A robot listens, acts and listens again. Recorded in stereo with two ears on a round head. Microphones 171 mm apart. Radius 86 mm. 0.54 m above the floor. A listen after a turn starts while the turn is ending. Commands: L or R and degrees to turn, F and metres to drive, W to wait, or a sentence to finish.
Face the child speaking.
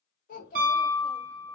L45
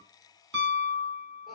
W
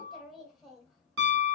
Facing the child speaking.